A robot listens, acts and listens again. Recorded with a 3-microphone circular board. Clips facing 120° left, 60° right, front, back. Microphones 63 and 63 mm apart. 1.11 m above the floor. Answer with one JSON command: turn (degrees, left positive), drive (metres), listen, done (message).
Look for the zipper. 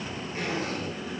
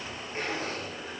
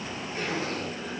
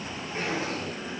{"turn": -115}
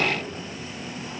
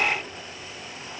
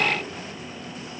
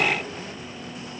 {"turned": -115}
{"listen": true}
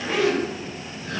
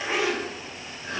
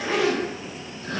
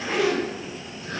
{"turn": 10}
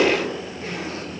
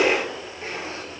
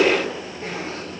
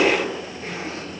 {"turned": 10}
{"done": "Found it: a zipper, straight ahead, 1 to 2 m away."}